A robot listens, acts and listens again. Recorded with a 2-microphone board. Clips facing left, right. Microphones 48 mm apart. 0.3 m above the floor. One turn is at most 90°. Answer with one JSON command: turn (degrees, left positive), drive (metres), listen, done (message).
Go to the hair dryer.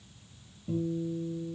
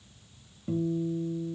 {"listen": true}
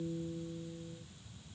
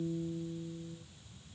{"listen": true}
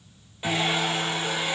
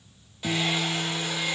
{"turn": 20}
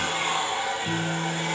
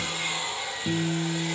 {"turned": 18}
{"turn": 90}
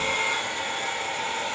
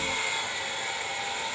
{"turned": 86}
{"turn": 55}
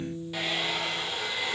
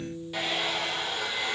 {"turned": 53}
{"drive": 1.0}
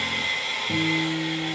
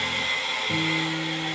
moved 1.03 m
{"drive": 1.0}
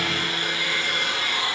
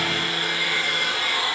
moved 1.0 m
{"drive": 1.0}
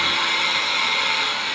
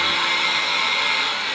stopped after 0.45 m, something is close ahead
{"done": "I am next to the hair dryer."}